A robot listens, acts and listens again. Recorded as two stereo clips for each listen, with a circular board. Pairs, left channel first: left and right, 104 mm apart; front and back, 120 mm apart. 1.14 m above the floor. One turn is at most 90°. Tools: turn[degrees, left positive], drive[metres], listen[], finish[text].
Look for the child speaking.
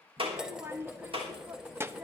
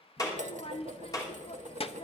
Thought: The child speaking: 25° right.
Action: turn[-25]
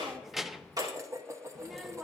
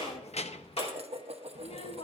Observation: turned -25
Action: finish[Found it: a child speaking, straight ahead, under 1 m away.]